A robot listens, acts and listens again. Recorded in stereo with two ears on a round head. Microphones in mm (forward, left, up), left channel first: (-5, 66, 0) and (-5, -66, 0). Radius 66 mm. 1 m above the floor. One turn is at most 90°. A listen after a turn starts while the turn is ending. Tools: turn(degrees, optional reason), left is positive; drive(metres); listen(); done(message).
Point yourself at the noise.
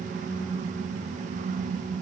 listen()
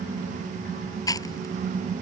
turn(degrees=25, reason="The chewing: about 25° left or 155° left.")
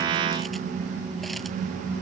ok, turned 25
listen()
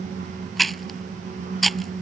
done("Found it: chewing, straight ahead.")